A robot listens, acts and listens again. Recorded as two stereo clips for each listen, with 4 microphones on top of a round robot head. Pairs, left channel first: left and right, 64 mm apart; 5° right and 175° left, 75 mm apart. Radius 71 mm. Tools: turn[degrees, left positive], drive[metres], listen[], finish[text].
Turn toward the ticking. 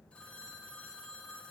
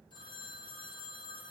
Action: listen[]
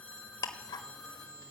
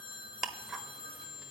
Thought: The ticking: 90° left.
Action: turn[90]
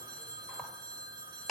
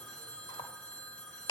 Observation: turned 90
Action: finish[Found it: ticking, straight ahead, 1 to 2 m away.]